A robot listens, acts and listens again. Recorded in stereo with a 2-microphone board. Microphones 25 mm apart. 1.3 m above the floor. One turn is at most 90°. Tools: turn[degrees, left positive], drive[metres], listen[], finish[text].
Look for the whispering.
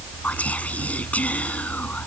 Thought: The whispering: about 70° left or 110° left.
Action: turn[70]
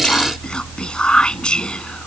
Thought: So it is at 40° left.
Action: turn[40]
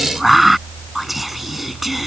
Action: finish[Facing the whispering.]